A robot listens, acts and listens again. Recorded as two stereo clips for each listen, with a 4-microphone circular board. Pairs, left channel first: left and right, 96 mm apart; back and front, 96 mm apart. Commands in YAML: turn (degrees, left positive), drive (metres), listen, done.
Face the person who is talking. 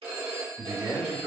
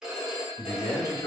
turn: -155
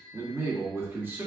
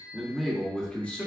turn: -135
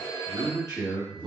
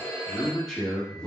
turn: -105
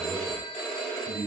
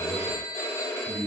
turn: -30
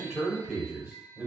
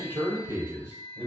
done: "Facing the man speaking."